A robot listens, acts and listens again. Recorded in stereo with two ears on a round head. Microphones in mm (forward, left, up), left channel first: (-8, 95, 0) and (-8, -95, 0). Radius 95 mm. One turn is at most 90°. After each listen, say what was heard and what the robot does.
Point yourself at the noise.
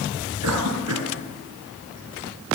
Turn 90° right.
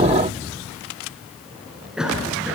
Found it: a cough, straight ahead.